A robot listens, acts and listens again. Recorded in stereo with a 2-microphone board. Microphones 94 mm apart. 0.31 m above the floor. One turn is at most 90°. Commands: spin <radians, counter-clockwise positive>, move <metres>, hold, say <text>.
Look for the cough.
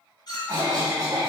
spin -0.87
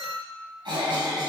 spin -1.22
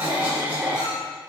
spin -0.44
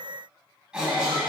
spin -0.17
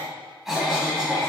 say Facing the cough.